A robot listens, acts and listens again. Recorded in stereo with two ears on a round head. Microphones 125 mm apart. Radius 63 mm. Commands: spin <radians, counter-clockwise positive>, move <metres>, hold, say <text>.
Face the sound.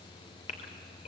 spin 0.87
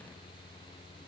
hold
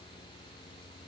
say I heard a gasp, but can't make it out now. It was about straight ahead or 80° left.